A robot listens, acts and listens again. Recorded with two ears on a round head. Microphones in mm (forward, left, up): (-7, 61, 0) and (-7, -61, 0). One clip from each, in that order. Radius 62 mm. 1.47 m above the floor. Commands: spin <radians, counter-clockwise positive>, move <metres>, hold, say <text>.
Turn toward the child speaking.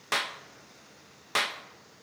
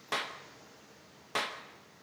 hold
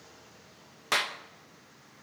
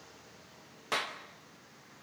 hold
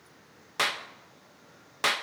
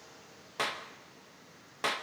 say I can't make out a child speaking to turn to.